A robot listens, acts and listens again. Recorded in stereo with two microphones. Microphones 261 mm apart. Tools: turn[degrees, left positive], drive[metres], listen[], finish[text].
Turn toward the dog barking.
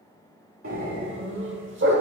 Thought: The dog barking: about 45° right or 135° right.
Action: turn[-45]
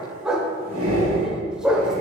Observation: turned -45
Action: finish[Facing the dog barking.]